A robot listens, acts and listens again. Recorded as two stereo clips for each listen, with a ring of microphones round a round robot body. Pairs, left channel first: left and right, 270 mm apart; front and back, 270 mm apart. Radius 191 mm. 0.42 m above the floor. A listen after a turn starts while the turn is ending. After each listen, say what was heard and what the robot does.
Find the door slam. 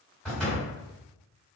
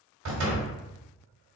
The door slam: straight behind. Turn 180° left.
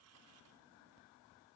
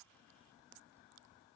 I heard a door slam from this way, but can't make it out now.